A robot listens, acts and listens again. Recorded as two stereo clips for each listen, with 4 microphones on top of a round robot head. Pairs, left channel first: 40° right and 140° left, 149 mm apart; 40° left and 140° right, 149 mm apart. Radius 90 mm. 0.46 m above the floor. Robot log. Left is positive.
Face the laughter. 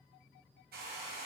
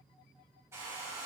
cmd idle
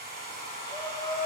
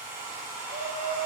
note: The laughter: 110° right.
cmd yaw -110
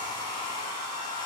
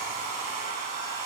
cmd idle
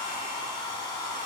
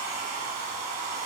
cmd idle
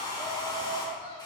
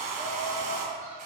note: The laughter is now 10° left.
cmd yaw +10
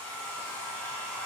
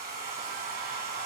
cmd idle
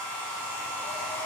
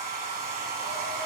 cmd idle
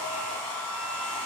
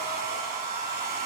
end: Facing where the laughter came from. I can't hear it now.